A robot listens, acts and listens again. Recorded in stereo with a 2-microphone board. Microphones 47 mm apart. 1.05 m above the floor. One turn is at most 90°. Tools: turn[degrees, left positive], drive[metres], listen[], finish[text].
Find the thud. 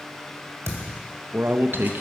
Thought: The thud: about 75° right or 105° right.
Action: turn[-75]
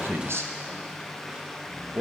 Action: listen[]
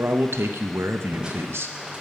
Action: finish[I heard a thud, but can't make it out now. It was about straight ahead or 30° right.]